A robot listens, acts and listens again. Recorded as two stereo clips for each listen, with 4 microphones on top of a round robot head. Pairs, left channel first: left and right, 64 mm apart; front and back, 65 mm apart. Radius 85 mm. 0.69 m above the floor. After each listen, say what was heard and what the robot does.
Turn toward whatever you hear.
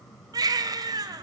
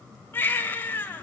The baby crying: 60° right. Turn 60° right.
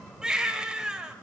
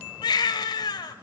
The baby crying is now 10° right. Turn 10° right.
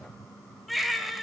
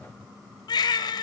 Facing the baby crying, 2 to 4 m away.